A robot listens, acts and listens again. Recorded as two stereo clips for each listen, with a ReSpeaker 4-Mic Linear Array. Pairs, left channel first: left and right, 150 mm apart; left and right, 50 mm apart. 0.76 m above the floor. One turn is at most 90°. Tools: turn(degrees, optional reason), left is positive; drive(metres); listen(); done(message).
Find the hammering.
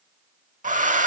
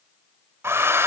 listen()
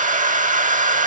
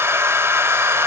listen()
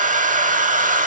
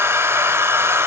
done("I can't make out hammering, only a hair dryer.")